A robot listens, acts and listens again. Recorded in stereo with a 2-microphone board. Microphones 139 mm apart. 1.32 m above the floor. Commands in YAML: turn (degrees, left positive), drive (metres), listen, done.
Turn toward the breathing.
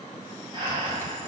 turn: -30
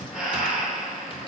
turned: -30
done: "Found it: breathing, straight ahead."